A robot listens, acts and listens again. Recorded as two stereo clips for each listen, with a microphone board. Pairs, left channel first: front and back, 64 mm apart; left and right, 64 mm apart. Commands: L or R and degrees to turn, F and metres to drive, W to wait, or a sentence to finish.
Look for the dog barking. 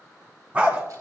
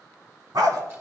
R110
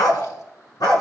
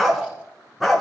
Found it: a dog barking, straight ahead.